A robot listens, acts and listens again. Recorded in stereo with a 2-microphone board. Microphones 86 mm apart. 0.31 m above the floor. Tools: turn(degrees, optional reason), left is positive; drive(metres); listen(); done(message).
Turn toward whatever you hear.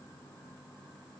listen()
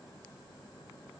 listen()
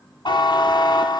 turn(degrees=60, reason="The buzzer: about 60° left or 120° left.")
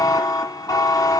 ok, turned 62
turn(degrees=50, reason="So it is at 50° left.")
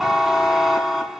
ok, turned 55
done("Found it: a buzzer, straight ahead.")